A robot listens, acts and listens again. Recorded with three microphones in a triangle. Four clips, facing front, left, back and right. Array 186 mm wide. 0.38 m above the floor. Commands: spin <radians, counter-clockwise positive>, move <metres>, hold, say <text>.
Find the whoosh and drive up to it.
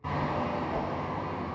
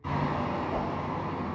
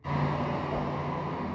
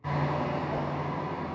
spin -1.05
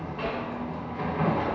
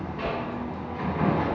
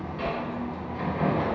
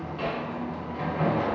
spin -0.44
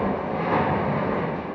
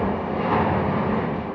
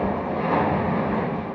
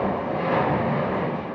hold
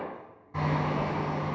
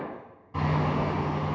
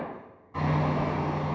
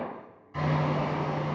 move 1.0
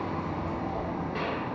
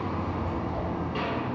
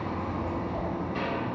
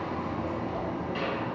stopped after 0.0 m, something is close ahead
say Blocked. The whoosh is further on, straight ahead.